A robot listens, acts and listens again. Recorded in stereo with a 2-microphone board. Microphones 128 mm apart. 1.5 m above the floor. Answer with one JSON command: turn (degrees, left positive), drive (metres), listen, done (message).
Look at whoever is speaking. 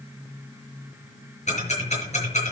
{"listen": true}
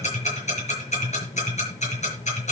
{"listen": true}
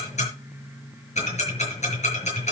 {"done": "I can't make out anyone speaking, only ticking."}